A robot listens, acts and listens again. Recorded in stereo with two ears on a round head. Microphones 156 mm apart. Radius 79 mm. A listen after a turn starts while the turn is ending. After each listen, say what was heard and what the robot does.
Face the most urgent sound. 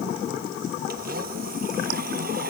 Keep listening.
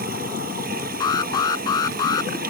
The alarm: about 25° left or 155° left. Turn 25° left.
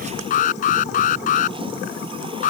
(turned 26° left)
So it is at 130° left. Turn 130° left.
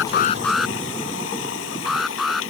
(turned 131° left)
Found it: an alarm, straight ahead.